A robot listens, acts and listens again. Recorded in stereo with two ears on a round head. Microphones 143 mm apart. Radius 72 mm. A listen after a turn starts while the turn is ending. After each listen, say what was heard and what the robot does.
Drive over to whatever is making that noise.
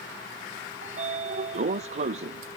The sliding door: about 40° right or 140° right. Turn 40° right.
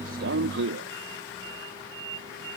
So it is at 100° right. Turn 100° right.
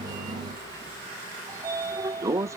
The sliding door is now 20° right. Turn 20° right.
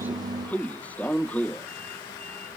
The sliding door is now 10° left. Turn 10° left.
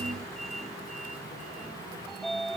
Drive 1.0 m forward.
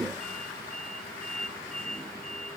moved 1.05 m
Drive 1.0 m forward.
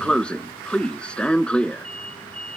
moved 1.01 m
Drive 1.0 m forward.
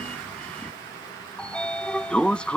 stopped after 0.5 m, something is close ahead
I am next to the sliding door.